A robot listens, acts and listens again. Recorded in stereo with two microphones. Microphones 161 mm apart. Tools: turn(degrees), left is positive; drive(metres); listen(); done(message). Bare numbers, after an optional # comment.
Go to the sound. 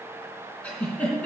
turn(30)
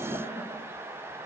listen()
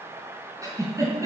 # So it is at 20° right.
turn(-20)
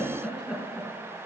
drive(1.0)
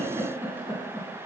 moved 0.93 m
# The giggle is now 15° right.
turn(-15)
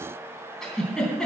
drive(1.0)
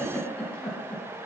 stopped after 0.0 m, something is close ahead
# The giggle is now 10° left.
turn(10)
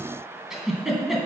done("Blocked. The giggle is further on, straight ahead.")